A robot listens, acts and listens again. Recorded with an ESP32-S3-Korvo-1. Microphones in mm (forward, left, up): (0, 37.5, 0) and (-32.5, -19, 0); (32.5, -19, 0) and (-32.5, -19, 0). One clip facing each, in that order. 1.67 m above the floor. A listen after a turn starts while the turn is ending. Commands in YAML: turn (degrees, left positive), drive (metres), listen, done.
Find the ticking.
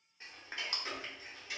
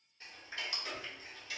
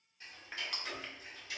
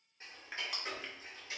turn: 125
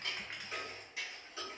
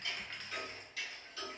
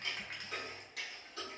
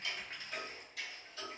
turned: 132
done: "Facing the ticking, under 1 m away."